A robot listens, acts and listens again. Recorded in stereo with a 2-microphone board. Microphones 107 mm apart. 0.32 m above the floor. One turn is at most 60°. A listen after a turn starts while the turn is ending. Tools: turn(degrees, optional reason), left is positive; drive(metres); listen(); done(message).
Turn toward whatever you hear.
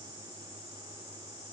listen()
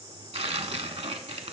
turn(degrees=-60, reason="The tearing paper: about 75° right or 105° right.")
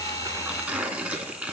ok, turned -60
turn(degrees=-15, reason="So it is at 15° right.")
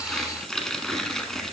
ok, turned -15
done("Found it: tearing paper, straight ahead.")